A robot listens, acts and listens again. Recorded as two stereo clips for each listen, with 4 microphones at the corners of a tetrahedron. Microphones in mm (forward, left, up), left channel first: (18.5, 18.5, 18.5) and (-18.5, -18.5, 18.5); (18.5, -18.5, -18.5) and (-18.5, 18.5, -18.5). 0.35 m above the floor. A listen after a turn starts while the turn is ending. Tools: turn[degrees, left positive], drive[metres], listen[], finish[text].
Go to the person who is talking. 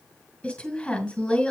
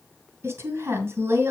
Thought: The woman speaking: 110° left.
Action: turn[110]
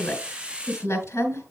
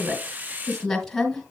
Thought: The woman speaking is now 40° left.
Action: turn[40]
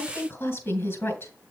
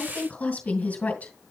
Thought: The woman speaking is now 15° left.
Action: turn[15]
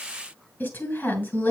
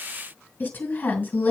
Action: drive[1.0]
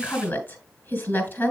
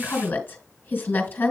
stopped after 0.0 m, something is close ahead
Action: finish[Blocked. The woman speaking is further on, straight ahead.]